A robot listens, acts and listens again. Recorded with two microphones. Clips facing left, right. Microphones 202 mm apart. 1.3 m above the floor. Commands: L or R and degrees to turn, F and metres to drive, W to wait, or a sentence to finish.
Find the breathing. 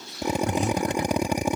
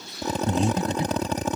R25
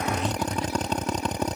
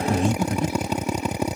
R130
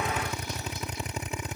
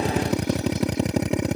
W
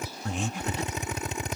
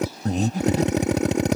R40
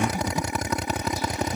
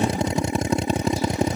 L10
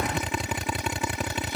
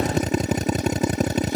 W
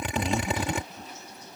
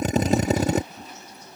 W
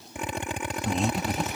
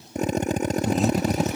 Facing the breathing.